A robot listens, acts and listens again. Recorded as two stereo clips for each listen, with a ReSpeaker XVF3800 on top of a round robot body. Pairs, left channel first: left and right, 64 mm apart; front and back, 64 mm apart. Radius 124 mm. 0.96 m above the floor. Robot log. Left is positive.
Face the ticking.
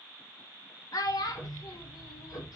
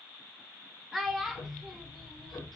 note: The ticking: 40° left.
cmd yaw +40
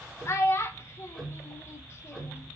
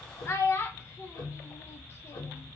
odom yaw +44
end: Facing the ticking, 1 to 2 m away.